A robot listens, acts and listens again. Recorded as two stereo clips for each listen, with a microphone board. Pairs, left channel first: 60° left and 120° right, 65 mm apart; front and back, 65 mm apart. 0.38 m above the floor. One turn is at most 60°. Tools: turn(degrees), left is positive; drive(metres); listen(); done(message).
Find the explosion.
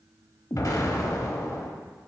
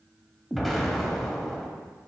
turn(degrees=60)
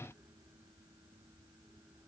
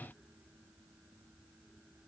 turn(degrees=30)
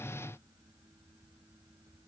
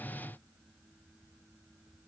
done("Facing where the explosion came from. I can't hear it now.")